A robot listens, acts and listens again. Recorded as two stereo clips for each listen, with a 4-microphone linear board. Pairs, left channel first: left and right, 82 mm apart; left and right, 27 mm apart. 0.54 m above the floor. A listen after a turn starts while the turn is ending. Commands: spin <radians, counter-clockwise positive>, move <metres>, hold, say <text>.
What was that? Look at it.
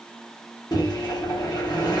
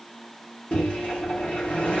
spin 0.96
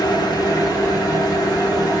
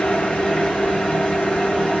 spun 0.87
spin 1.05
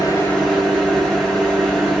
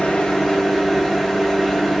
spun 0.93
say Facing the microwave.